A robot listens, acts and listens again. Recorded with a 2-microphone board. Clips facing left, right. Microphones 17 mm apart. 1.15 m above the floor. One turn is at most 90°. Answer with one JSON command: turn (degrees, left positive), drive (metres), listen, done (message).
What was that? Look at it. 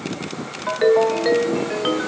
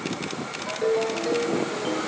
{"turn": 55}
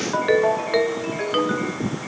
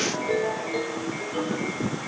{"turn": 65}
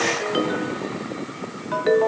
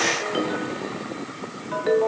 {"turn": 10}
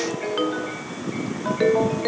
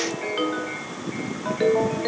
{"done": "Facing the ringtone."}